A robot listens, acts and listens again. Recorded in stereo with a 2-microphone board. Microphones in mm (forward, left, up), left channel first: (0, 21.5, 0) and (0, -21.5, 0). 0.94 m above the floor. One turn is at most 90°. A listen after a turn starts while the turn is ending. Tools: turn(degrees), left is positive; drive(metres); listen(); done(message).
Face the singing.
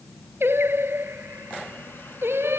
turn(degrees=-90)
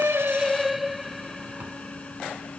done("Found it: singing, straight ahead.")